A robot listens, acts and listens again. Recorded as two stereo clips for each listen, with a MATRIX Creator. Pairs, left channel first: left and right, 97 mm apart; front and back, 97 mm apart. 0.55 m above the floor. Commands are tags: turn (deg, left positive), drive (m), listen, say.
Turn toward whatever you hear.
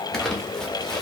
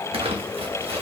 <turn deg="175"/>
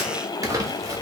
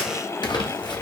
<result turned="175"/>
<listen/>
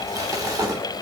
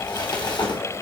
<turn deg="-35"/>
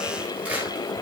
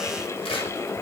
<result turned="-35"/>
<listen/>
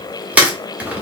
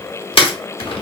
<turn deg="-15"/>
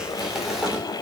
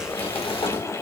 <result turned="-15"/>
<listen/>
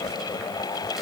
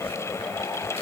<listen/>
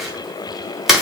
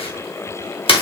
<say>Found it: crumpling, straight ahead, under 1 m away.</say>